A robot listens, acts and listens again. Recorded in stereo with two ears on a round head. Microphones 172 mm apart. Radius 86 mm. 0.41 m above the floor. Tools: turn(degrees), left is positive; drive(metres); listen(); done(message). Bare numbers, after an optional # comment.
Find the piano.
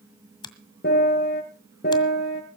# The piano: about 50° left or 130° left.
turn(50)
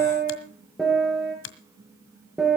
done("Facing the piano, over 4 m away.")